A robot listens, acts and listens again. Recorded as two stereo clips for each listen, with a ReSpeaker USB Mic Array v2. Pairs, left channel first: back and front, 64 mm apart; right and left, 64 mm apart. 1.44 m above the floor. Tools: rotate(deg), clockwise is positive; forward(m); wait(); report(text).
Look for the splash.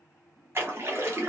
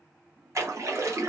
rotate(-50)
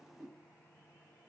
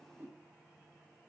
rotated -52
report("I heard a splash from this way, but can't make it out now.")